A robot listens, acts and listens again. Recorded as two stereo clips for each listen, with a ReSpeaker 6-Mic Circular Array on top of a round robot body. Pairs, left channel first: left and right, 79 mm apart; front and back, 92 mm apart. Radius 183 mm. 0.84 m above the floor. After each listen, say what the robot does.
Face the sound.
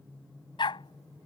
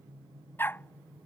Turn 70° left.
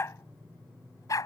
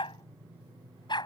Turn 40° left.
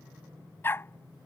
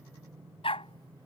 Turn 25° left.
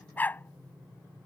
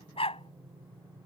Turn 20° left.
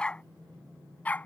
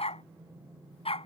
Turn 15° left.
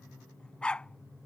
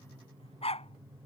Turn 10° left.
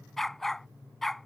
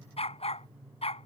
Facing the dog barking.